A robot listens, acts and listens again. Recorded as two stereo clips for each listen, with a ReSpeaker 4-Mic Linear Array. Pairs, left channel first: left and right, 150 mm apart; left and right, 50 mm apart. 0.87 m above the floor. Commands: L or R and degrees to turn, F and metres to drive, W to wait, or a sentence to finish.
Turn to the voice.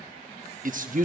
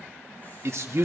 R65
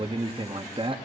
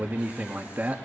R40
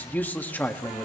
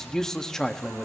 L15
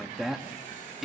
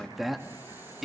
Found it: a man speaking, straight ahead.